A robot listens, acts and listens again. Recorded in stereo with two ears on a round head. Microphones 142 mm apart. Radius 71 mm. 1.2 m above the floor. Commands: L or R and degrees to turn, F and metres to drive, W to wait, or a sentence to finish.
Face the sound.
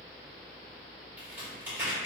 R30
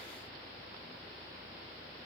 W
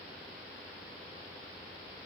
I heard a crack, but can't make it out now. It was about 20° left or 140° right.